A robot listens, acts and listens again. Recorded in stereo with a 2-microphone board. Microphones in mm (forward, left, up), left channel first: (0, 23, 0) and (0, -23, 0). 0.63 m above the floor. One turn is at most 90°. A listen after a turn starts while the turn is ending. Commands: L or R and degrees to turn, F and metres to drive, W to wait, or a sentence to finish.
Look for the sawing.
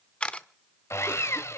L90
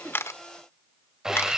R15
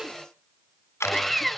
Facing the sawing.